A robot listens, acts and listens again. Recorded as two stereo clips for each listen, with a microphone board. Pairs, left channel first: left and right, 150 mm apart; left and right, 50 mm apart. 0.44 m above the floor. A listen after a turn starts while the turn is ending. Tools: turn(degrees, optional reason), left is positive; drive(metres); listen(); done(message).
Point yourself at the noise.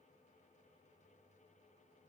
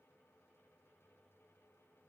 listen()
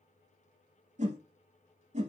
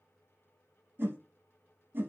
turn(degrees=-50, reason="The whoosh: about 50° right or 130° right.")
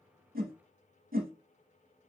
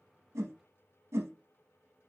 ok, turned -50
turn(degrees=-80, reason="So it is at 80° right.")
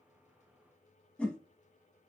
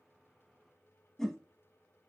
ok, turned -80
turn(degrees=10, reason="The whoosh is now 10° left.")
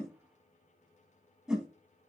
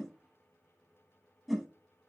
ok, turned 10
done("Found it: a whoosh, straight ahead.")